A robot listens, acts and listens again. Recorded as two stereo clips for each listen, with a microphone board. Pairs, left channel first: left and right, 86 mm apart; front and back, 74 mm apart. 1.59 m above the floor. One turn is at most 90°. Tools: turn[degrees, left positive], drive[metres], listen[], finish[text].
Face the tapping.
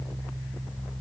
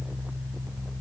Action: listen[]
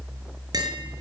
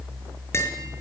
Thought: The tapping: 55° right.
Action: turn[-55]
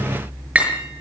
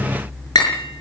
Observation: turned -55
Thought: The tapping is now 15° right.
Action: turn[-15]
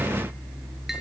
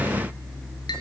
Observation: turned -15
Action: listen[]
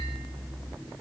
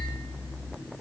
Action: listen[]
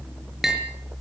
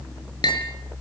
Action: finish[Facing the tapping.]